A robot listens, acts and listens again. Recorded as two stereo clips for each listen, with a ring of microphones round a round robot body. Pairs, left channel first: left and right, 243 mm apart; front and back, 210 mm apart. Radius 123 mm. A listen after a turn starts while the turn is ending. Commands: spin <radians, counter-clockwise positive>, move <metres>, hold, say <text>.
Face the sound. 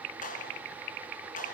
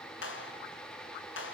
spin 0.52
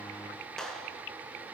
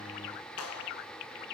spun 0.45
say Facing the clap.